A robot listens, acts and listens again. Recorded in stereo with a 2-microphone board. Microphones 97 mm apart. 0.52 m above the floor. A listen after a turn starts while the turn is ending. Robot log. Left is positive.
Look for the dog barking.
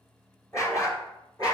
note: The dog barking: about 40° left or 140° left.
cmd yaw +40
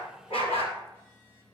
note: So it is at 95° left.
cmd yaw +95
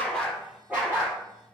note: The dog barking is now 15° right.
cmd yaw -15
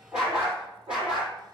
note: The dog barking is now 10° right.
cmd yaw -10
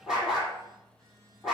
end: Facing the dog barking.